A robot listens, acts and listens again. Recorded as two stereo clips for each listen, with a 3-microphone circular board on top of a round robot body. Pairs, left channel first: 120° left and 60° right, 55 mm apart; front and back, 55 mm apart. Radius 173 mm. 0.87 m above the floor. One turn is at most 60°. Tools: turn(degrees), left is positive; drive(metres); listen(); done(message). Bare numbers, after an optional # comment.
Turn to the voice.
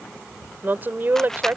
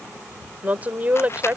# The woman speaking: 115° right.
turn(-60)
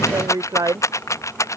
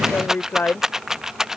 # The woman speaking is now 55° right.
turn(-55)
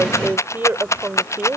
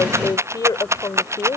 done("Facing the woman speaking.")